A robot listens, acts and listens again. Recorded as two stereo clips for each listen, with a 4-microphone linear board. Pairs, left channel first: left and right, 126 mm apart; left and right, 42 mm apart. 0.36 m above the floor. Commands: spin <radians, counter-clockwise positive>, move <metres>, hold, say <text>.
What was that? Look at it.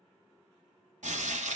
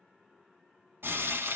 spin -1.13
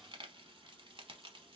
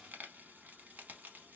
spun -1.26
spin -0.70
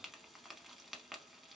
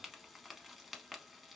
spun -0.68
say Facing the frying, under 1 m away.